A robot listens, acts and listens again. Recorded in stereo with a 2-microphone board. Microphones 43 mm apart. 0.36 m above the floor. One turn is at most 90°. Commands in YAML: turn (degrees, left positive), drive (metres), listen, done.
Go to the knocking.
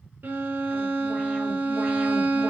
listen: true
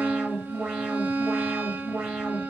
listen: true
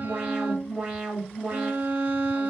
done: "I can't make out knocking to turn to."